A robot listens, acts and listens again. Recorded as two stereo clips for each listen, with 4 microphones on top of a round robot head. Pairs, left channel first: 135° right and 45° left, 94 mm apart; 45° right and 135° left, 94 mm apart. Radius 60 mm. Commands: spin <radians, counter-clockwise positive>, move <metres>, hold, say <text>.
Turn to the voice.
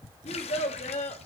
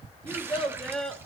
spin -2.27
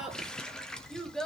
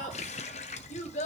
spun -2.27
spin -0.96
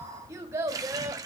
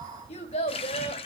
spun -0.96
spin -0.44
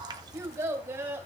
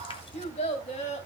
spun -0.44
spin -0.44
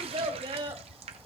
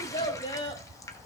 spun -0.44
say Facing the child speaking.